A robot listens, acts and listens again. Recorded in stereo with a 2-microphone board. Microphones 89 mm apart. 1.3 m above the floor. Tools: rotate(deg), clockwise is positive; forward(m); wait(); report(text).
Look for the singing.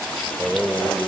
rotate(-30)
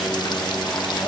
wait()
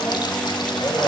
rotate(-140)
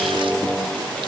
report("Facing the singing, over 4 m away.")